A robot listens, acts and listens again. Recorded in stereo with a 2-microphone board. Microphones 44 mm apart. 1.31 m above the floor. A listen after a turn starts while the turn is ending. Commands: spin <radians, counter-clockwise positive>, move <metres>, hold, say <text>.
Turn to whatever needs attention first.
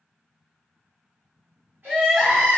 spin -0.52
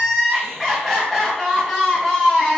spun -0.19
say Facing the crying, under 1 m away.